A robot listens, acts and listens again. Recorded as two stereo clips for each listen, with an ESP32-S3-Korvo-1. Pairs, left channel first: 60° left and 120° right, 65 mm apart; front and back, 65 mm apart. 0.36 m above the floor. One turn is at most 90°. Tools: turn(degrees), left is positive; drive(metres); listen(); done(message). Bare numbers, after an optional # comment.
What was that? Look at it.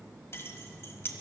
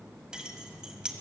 # The keys jangling: 105° left.
turn(90)
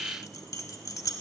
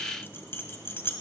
# The keys jangling is now 45° left.
turn(45)
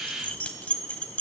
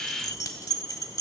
done("Facing the keys jangling.")